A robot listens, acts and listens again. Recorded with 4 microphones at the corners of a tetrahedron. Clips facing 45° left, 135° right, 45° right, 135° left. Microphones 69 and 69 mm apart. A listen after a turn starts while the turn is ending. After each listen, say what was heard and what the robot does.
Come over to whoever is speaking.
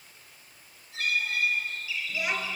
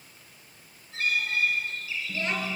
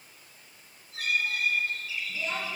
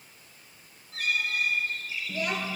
The child speaking: 120° left. Turn 120° left.
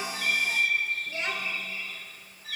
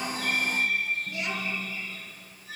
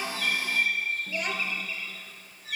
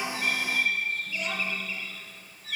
The child speaking is now 10° right. Turn 10° right.
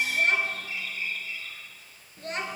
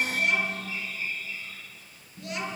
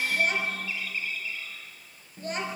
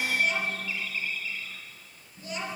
Drive 1.0 m forward.
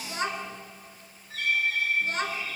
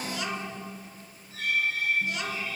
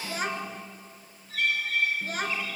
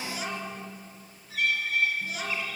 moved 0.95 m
Drive 1.0 m forward.
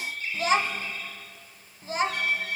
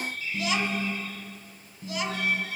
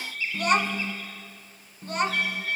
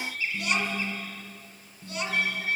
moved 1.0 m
Drive 1.0 m forward.
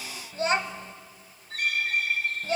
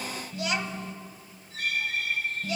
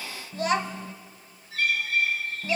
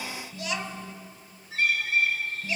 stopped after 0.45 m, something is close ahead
I am next to the child speaking.